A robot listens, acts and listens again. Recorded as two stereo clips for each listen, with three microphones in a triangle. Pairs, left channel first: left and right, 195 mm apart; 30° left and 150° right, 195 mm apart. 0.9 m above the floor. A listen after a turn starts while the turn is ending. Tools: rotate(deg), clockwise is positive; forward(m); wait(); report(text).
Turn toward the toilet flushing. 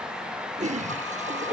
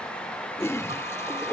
rotate(45)
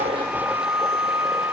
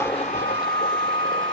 wait()
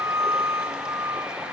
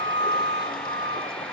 wait()
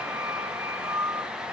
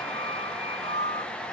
report("I heard a toilet flushing from this way, but can't make it out now.")